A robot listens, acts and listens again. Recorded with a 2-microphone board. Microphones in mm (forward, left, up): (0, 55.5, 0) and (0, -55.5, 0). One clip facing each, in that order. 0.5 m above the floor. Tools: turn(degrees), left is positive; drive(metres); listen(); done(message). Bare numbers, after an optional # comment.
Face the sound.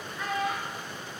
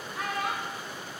# The child speaking: about 70° right or 110° right.
turn(-70)
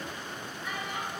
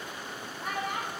# So it is at 55° right.
turn(-55)
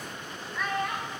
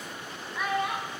# The child speaking is now 10° right.
turn(-10)
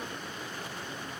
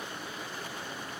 listen()
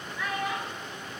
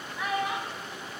# The child speaking is now 20° right.
turn(-20)
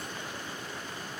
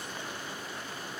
done("Facing the child speaking.")